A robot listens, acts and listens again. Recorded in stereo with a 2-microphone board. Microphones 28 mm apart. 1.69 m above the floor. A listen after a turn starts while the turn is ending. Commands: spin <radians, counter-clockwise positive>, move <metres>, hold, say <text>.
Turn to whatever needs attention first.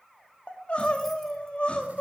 spin 0.70
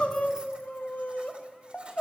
spin 1.57
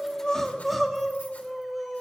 say Facing the crying.